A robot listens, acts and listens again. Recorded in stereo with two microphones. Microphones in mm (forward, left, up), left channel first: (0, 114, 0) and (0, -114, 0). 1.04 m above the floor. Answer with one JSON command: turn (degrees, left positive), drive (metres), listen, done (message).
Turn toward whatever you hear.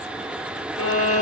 {"turn": 90}
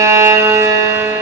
{"turn": -10}
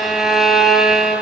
{"done": "Found it: a violin, straight ahead, 1 to 2 m away."}